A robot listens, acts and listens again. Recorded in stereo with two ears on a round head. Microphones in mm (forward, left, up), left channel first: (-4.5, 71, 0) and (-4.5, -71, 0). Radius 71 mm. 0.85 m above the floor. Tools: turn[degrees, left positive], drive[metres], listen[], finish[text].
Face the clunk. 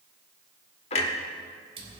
Thought: The clunk: about 40° left or 140° left.
Action: turn[40]
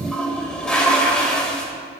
Action: listen[]
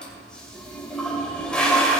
Action: finish[I heard a clunk, but can't make it out now. It was about straight ahead or 100° left.]